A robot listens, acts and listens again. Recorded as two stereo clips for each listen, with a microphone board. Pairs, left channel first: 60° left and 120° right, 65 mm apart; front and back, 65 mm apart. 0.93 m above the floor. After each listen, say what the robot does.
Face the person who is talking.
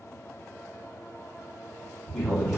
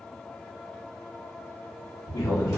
Turn 10° right.
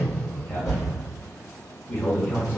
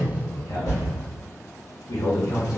Found it: a man speaking, straight ahead.